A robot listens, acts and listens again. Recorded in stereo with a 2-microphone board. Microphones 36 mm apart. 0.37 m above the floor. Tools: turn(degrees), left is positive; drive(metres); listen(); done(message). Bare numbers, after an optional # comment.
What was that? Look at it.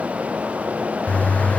# The bird: about 40° left or 140° left.
turn(40)
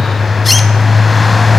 done("Found it: a bird, straight ahead.")